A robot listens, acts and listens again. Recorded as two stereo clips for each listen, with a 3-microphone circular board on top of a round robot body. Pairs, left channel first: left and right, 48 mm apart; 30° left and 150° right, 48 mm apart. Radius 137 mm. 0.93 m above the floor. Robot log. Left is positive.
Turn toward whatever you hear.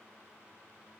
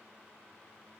cmd idle
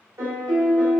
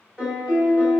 note: The piano: 65° right.
cmd yaw -65
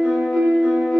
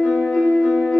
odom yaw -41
note: The piano is now 25° right.
cmd yaw -25
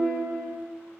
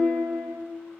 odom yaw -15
note: The piano is now 10° right.
cmd yaw -10
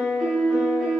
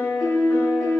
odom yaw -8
end: Facing the piano.